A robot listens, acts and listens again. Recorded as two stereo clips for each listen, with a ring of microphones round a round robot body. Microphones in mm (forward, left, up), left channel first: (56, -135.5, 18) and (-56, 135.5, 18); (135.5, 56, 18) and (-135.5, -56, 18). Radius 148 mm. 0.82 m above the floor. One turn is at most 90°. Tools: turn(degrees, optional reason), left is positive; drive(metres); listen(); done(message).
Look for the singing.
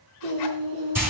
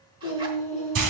turn(degrees=90, reason="The singing: 90° left.")
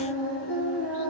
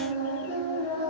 turn(degrees=-15, reason="The singing is now 15° right.")
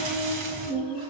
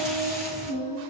done("Found it: singing, straight ahead, 2 to 4 m away.")